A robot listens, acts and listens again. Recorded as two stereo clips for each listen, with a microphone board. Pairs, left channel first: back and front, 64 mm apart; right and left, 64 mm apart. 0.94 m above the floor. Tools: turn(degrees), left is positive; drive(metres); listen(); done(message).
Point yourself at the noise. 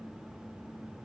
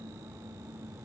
listen()
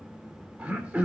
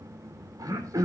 turn(degrees=65)
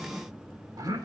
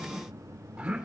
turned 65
turn(degrees=10)
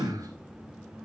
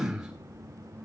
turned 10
done("Facing the throat clearing.")